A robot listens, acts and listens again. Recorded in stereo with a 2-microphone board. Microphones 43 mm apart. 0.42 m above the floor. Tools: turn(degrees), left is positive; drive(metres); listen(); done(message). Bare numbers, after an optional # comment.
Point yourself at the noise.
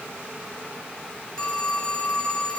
# The phone ringing: about 20° left or 160° left.
turn(20)
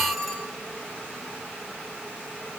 done("Found it: a phone ringing, straight ahead, 2 to 4 m away.")